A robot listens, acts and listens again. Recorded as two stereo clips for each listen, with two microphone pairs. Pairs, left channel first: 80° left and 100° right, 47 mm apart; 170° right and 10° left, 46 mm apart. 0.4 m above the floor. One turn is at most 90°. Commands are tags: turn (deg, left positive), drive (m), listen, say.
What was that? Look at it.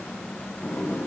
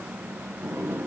<turn deg="35"/>
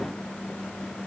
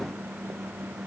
<listen/>
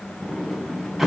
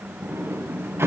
<turn deg="-10"/>
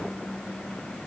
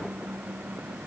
<listen/>
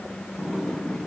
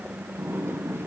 <say>Found it: a sliding door, straight ahead.</say>